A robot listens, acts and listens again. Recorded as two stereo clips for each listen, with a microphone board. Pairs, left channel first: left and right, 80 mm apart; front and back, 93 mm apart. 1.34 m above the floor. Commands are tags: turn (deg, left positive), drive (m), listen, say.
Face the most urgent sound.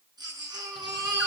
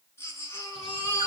<turn deg="-60"/>
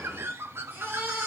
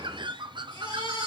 <turn deg="-30"/>
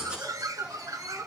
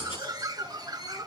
<turn deg="-15"/>
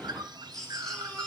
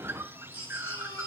<say>Facing the baby crying, over 4 m away.</say>